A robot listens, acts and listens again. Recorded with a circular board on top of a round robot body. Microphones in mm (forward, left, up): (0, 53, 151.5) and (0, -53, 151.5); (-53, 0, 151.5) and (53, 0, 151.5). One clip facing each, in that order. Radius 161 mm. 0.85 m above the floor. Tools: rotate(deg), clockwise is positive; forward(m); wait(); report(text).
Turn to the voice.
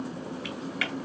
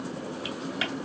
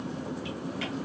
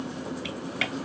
wait()
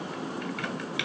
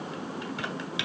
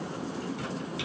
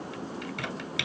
wait()
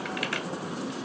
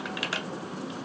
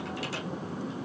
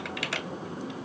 report("I can't make out anyone speaking, only typing on a keyboard.")